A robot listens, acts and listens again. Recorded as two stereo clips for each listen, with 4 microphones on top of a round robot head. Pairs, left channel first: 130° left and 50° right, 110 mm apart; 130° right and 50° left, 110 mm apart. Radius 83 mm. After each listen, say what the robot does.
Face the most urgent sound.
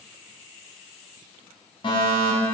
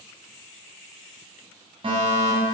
Turn 90° left.
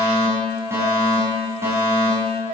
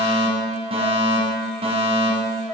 Turn 15° left.
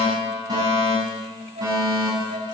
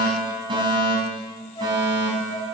Facing the fire alarm, over 4 m away.